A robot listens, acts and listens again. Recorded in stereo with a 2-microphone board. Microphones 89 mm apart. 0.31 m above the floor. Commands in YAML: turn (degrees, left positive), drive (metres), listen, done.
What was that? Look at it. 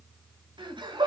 turn: -60
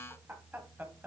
turn: -20
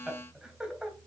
turn: -10
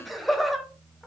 done: "Facing the laughter, 1 to 2 m away."